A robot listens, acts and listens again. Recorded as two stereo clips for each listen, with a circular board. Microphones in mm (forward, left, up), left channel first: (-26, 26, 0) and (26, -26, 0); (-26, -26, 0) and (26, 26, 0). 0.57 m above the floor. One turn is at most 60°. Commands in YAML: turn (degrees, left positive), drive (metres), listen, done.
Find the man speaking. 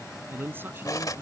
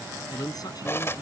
turn: -60
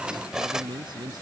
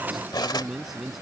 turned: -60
turn: -40
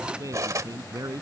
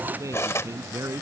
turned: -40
done: "Found it: a man speaking, straight ahead."